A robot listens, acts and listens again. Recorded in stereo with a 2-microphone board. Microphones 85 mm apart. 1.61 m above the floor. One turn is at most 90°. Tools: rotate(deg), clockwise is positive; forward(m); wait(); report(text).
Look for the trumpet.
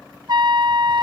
rotate(55)
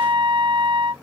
rotate(65)
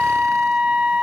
rotate(10)
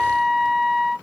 report("Facing the trumpet.")